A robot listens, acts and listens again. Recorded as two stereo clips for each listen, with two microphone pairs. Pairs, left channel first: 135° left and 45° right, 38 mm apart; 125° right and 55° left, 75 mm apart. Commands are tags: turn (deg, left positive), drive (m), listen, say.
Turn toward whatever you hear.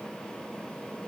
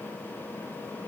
<listen/>
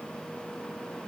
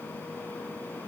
<listen/>
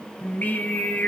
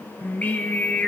<turn deg="160"/>
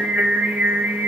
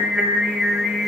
<turn deg="-35"/>
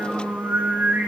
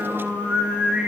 <turn deg="-25"/>
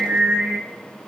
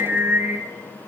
<turn deg="-15"/>
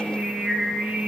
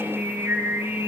<say>Facing the singing, 1 to 2 m away.</say>